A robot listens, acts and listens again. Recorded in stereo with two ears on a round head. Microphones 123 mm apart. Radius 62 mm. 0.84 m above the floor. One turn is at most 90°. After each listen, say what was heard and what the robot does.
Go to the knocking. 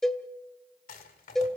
Keep listening.
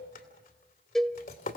Keep listening.
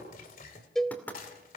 Turn 30° left.
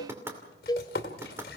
So it is at 15° right. Turn 15° right.
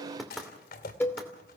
Drive 1.0 m forward.
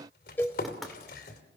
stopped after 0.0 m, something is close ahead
Blocked. The knocking is further on, straight ahead.